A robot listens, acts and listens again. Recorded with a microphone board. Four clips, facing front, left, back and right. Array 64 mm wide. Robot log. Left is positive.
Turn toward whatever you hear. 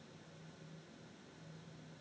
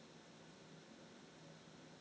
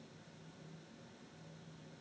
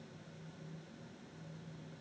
cmd idle
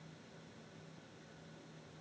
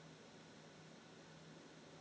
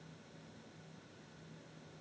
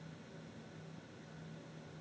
cmd idle
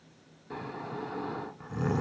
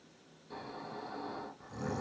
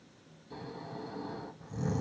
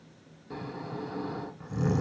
note: The snoring: 20° right.
cmd yaw -20
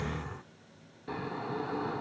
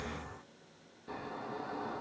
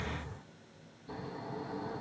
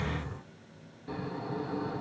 end: Found it: snoring, straight ahead, under 1 m away.